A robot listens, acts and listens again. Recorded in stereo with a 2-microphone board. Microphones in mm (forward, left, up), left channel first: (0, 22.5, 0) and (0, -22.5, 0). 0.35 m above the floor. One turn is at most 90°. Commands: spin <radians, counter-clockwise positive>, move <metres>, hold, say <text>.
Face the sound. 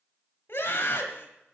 spin 0.96
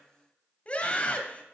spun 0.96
spin 0.61
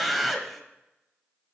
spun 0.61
say Facing the scream, 1 to 2 m away.